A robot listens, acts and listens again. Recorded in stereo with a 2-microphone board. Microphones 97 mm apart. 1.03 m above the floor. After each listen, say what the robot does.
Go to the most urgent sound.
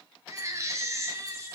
Turn 30° right.
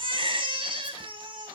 Turn 120° right.
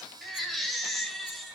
Drive 1.0 m forward.
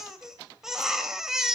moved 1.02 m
Drive 1.0 m forward.
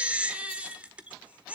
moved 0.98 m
Turn 15° right.
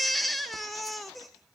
Drive 1.0 m forward.
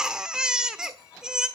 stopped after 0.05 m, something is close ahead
Turn 10° right.
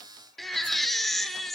Arrived at the baby crying, straight ahead.